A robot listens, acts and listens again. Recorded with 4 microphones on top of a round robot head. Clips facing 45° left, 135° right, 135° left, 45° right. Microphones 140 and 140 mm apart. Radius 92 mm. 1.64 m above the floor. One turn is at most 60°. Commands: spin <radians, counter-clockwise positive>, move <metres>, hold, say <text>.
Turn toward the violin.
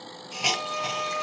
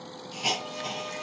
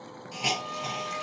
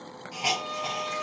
spin 0.35
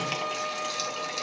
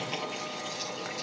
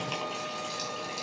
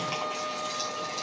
say Facing the violin, 1 to 2 m away.